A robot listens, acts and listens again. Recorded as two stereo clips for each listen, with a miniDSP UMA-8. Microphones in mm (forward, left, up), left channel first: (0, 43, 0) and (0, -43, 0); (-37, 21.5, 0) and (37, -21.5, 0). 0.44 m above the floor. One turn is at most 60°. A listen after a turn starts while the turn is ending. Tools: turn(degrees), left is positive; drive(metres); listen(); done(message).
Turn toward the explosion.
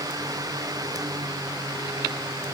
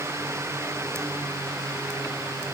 listen()
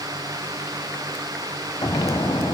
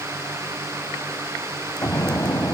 turn(degrees=60)
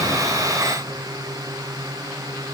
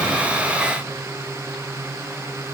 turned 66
turn(degrees=35)
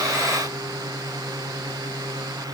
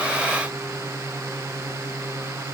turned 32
done("I heard an explosion from this way, but can't make it out now.")